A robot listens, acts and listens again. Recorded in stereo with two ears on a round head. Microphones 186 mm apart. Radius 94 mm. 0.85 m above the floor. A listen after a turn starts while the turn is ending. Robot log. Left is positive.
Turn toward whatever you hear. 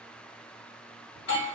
note: The doorbell: about 60° left or 120° left.
cmd yaw +60
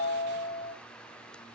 note: So it is at 30° left.
cmd yaw +30
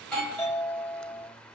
end: Facing the doorbell, 1 to 2 m away.